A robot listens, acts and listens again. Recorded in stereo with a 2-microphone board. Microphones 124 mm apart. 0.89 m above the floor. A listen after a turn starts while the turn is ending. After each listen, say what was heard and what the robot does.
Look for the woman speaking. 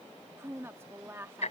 The woman speaking: about 20° right or 160° right. Turn 20° right.
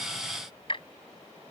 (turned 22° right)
Keep listening.
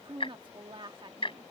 So it is at 135° right. Turn 135° right.
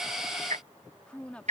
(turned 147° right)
The woman speaking is now 10° left. Turn 10° left.
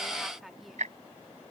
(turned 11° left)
Facing the woman speaking.